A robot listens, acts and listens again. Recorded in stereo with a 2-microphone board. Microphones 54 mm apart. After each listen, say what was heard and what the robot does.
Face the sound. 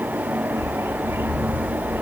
The bird: about 55° right or 125° right. Turn 55° right.
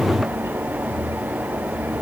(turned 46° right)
Keep listening.
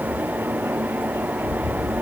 So it is at 75° right. Turn 75° right.
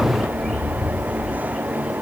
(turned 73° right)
Found it: a bird, straight ahead.